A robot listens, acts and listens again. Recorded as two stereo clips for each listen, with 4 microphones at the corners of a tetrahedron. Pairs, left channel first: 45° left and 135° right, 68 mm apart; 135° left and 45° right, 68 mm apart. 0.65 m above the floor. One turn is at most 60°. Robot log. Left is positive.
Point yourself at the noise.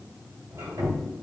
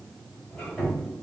note: The squeak: 150° right.
cmd yaw -60
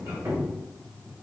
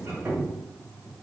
note: The squeak is now 85° right.
cmd yaw -60
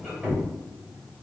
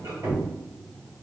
note: The squeak is now 45° right.
cmd yaw -45
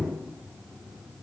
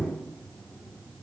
end: Facing the squeak.